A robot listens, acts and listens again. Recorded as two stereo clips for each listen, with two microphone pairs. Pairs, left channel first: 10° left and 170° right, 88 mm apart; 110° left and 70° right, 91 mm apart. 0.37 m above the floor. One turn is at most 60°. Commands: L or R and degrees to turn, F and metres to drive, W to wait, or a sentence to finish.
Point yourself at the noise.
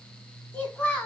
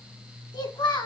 L60
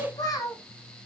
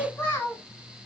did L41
L50
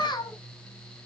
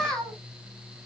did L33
L30
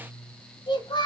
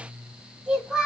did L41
L15
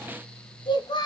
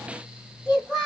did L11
L20
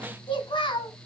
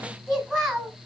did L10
L10
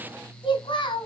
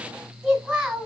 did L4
Found it: a child speaking, straight ahead.